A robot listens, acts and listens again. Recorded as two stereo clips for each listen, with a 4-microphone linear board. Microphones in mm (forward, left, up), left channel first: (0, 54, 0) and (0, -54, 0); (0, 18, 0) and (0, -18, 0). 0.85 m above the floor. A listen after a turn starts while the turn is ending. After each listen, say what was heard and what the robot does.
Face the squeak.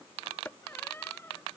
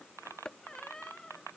The squeak: about 20° left or 160° left. Turn 20° left.
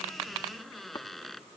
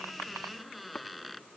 Found it: a squeak, straight ahead.